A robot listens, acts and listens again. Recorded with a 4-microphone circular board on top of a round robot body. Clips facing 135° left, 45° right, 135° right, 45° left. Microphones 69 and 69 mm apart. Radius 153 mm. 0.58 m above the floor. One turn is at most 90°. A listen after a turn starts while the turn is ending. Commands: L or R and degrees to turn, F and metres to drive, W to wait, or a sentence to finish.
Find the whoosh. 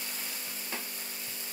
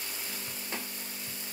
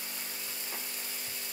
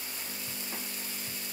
W
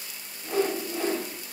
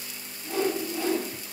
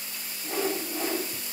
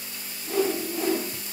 L90
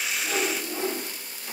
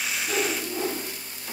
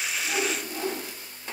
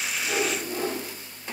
L90
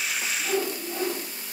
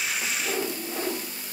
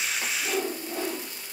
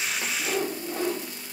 L10
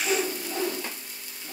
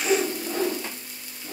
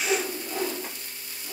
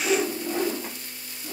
Found it: a whoosh, straight ahead, under 1 m away.